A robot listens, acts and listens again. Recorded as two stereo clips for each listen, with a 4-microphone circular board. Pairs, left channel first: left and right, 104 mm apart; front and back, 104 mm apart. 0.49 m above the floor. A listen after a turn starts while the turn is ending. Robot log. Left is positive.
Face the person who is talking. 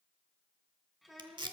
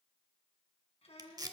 end: Found it: a child speaking, straight ahead, 2 to 4 m away.